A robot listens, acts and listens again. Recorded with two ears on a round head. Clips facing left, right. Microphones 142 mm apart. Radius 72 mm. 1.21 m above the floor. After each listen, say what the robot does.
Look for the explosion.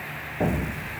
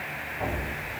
Turn 45° left.
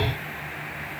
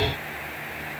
Keep listening.
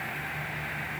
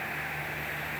I heard an explosion, but can't make it out now. It was about straight ahead or 90° left.